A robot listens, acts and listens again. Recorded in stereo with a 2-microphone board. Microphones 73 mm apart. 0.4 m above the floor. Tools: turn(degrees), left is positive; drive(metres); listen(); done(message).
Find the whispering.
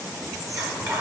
turn(degrees=-50)
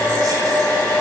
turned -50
listen()
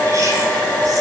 listen()
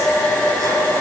done("I heard whispering, but can't make it out now. It was about straight ahead or 80° right.")